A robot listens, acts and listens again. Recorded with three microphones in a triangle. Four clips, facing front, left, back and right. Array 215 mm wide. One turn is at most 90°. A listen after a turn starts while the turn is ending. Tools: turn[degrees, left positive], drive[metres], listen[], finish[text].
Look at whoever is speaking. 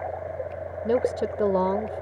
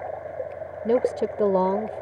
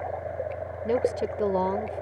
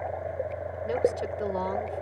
Thought: The woman speaking: 80° left.
Action: turn[80]
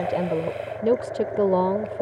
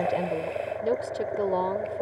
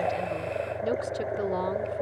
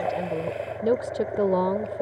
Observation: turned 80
Thought: The woman speaking is now 35° right.
Action: turn[-35]
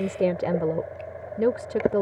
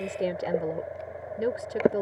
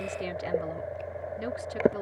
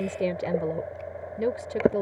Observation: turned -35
Thought: The woman speaking is now 10° right.
Action: turn[-10]
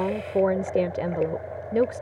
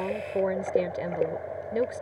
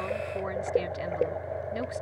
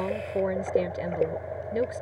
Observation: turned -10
Action: finish[Found it: a woman speaking, straight ahead.]